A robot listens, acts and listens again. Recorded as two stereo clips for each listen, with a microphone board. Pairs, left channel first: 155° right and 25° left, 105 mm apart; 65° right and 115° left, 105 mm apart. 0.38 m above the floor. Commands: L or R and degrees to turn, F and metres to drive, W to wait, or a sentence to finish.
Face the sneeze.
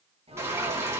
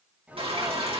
L35
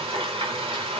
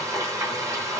I heard a sneeze from this way, but can't make it out now.